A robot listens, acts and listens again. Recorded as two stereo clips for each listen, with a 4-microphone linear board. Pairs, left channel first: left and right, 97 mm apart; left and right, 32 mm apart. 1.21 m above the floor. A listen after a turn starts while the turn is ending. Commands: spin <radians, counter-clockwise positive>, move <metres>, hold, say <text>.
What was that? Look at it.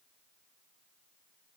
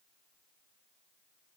hold
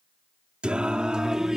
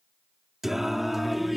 spin -0.52
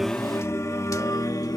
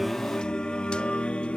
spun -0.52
spin 0.70
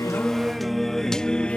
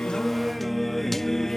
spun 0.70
spin 0.17
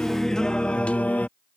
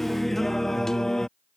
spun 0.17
spin 0.26
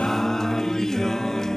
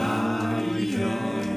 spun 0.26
say Found it: singing, straight ahead.